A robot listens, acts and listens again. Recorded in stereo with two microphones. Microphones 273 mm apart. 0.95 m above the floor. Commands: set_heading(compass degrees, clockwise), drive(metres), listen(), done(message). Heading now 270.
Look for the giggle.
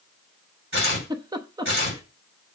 set_heading(285)
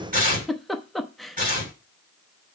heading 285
done("Found it: a giggle, straight ahead.")